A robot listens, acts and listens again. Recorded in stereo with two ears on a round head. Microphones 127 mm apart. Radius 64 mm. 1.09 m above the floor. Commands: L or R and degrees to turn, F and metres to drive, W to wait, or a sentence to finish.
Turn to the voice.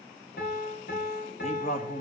L60
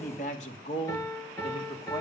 L45
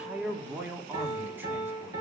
R10
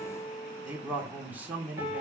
R10
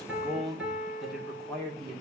Found it: a man speaking, straight ahead.